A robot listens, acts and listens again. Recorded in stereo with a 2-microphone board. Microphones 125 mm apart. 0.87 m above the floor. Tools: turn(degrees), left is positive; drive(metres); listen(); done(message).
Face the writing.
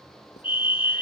listen()
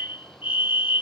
listen()
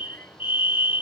done("I can't make out writing to turn to.")